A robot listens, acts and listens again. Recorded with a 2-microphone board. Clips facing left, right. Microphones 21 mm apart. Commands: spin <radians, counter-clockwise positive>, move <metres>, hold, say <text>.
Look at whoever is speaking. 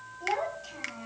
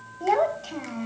spin -0.44
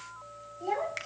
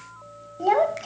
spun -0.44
spin -2.18
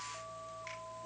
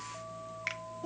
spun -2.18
spin -0.79
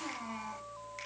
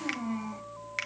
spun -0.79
spin 0.17
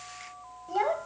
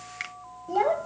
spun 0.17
say Facing the child speaking, 1 to 2 m away.